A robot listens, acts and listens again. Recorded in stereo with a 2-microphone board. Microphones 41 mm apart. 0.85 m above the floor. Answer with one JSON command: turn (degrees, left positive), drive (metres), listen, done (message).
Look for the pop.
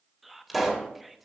{"turn": -30}
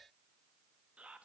{"listen": true}
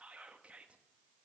{"done": "I heard a pop, but can't make it out now. It was about 25° left or 145° right."}